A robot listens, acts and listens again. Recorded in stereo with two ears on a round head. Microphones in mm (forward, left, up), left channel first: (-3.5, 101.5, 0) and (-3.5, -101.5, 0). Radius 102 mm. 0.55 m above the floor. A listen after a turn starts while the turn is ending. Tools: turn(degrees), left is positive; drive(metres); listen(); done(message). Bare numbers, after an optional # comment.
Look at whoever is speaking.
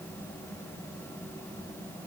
listen()
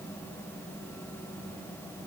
listen()
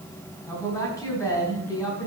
turn(30)
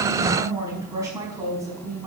# So it is at 15° right.
turn(-15)
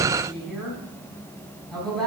done("Found it: a woman speaking, straight ahead.")